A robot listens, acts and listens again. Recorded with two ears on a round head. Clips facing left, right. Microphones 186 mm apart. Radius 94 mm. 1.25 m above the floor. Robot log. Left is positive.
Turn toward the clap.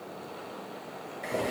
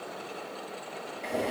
cmd idle
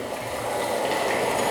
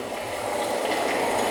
cmd idle
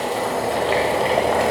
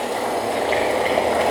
end: I can't make out a clap to turn to.